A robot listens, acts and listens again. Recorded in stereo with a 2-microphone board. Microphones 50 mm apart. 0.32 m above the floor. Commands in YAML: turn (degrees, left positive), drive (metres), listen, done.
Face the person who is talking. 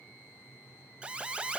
listen: true
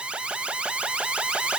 listen: true
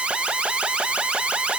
done: "I can't make out anyone speaking, only an alarm."